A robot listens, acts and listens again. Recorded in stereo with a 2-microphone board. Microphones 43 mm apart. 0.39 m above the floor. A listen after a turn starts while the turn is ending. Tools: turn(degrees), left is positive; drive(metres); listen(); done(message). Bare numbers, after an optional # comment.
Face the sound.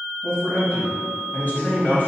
# The man speaking: about 45° left or 135° left.
turn(45)
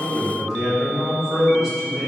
# So it is at 15° right.
turn(-15)
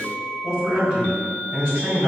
# The man speaking is now 30° right.
turn(-30)
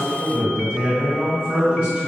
# The man speaking is now 20° right.
turn(-20)
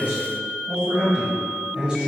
done("Facing the man speaking, 1 to 2 m away.")